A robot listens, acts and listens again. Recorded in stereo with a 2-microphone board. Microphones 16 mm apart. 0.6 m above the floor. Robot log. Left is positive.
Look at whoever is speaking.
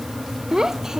note: The child speaking: about 45° right or 135° right.
cmd yaw -45
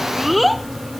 end: Facing the child speaking.